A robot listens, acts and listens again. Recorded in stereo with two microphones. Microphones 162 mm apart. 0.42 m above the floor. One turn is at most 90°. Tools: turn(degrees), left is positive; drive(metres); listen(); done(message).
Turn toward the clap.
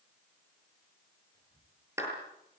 turn(degrees=-15)
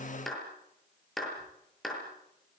done("Facing the clap.")